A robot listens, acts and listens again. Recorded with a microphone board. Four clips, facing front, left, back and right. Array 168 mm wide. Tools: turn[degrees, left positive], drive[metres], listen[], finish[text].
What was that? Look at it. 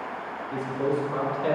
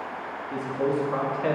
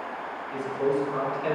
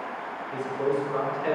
Thought: The man speaking: 70° left.
Action: turn[70]
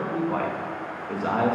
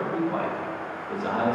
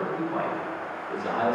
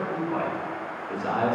Thought: The man speaking is now 10° left.
Action: turn[10]
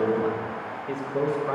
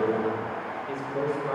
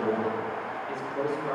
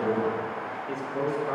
Action: finish[Facing the man speaking.]